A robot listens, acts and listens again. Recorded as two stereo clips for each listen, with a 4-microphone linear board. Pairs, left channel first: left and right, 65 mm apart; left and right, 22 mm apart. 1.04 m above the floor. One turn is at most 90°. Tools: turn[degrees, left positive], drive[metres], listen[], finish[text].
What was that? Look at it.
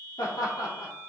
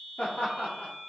Thought: The laughter: about 75° left or 105° left.
Action: turn[75]
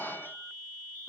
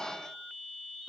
Thought: So it is at 35° left.
Action: turn[35]
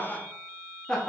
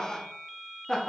Thought: The laughter is now 10° left.
Action: turn[10]
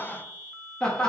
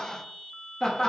Thought: The laughter is now 15° left.
Action: turn[15]
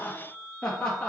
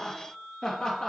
Thought: The laughter is now 15° left.
Action: turn[15]
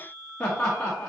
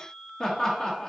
Thought: The laughter is now 10° left.
Action: turn[10]
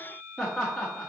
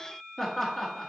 Action: finish[Found it: laughter, straight ahead.]